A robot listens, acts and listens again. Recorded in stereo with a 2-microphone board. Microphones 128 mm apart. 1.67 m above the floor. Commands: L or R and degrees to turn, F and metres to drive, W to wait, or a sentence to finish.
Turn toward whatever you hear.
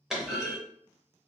R30
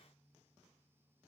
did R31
W
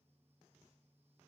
I heard a clunk, but can't make it out now. It was about 30° left or 145° right.